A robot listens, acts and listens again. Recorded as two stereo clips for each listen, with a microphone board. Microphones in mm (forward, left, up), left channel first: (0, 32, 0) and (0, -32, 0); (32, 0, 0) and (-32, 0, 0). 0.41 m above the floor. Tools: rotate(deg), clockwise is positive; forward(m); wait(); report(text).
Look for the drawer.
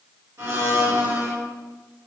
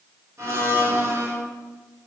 wait()
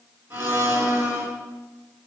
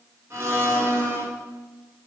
wait()
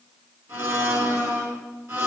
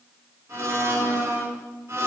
report("I can't make out a drawer to turn to.")